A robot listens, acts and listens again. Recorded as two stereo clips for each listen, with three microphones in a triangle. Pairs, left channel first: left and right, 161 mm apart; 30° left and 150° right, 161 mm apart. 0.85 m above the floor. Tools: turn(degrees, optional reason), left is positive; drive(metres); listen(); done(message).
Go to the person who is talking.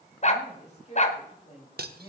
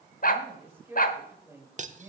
turn(degrees=135, reason="The woman speaking: 135° left.")
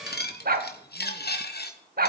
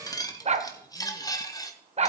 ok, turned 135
listen()
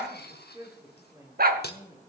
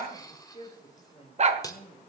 turn(degrees=-20, reason="The woman speaking is now 20° right.")
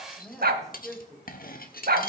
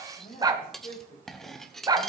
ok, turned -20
drive(metres=1.0)
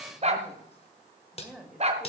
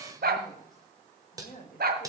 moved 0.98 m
drive(metres=1.0)
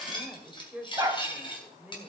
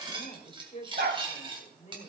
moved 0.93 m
turn(degrees=-10, reason="The woman speaking is now 10° right.")
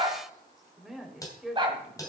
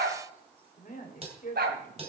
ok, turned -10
drive(metres=1.0)
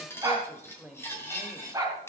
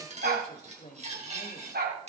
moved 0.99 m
drive(metres=1.0)
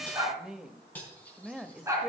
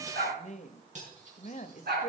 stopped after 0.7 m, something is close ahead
done("I am next to the woman speaking.")